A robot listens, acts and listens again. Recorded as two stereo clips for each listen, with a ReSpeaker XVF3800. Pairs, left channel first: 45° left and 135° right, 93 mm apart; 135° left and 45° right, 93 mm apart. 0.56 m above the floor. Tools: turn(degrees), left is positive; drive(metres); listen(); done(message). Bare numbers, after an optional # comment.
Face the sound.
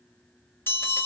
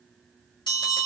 # The bell: 110° left.
turn(110)
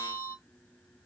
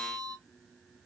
done("Facing the bell, 2 to 4 m away.")